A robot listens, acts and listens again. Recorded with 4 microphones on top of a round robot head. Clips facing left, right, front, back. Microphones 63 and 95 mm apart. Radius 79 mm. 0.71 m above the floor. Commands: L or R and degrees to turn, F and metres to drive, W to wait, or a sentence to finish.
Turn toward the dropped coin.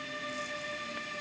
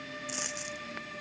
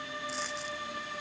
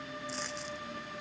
R90
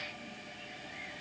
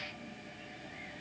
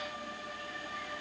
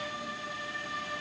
I heard a dropped coin from this way, but can't make it out now.